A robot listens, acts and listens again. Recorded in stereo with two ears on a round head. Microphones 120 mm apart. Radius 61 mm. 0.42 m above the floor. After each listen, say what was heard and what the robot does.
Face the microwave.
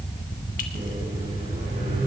Turn 90° right.
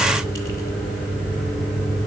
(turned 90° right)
So it is at 10° left. Turn 10° left.
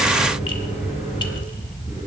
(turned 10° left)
Keep listening.
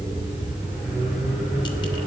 Facing the microwave.